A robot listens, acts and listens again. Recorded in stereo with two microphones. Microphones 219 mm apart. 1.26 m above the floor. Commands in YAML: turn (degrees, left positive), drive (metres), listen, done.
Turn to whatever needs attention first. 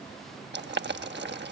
listen: true
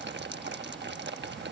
listen: true
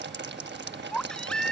turn: 30
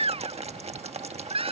turn: -25
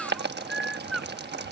done: "Found it: a baby crying, straight ahead."